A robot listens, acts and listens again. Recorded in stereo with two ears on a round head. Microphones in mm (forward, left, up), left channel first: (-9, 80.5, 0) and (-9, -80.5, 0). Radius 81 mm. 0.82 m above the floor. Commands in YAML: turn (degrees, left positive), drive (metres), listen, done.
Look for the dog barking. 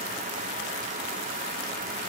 listen: true
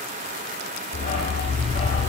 turn: 40
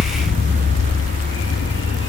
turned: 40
turn: 100
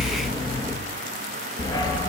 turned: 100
turn: 20
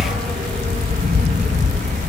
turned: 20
done: "Found it: a dog barking, straight ahead."